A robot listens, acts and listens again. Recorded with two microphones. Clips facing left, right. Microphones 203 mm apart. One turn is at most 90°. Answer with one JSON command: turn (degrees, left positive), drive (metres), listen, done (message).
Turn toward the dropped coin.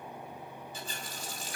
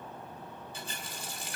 {"listen": true}
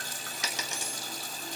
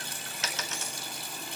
{"turn": 30}
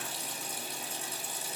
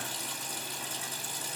{"listen": true}
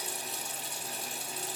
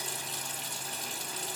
{"done": "I heard a dropped coin, but can't make it out now. It was about 15° right or 135° left."}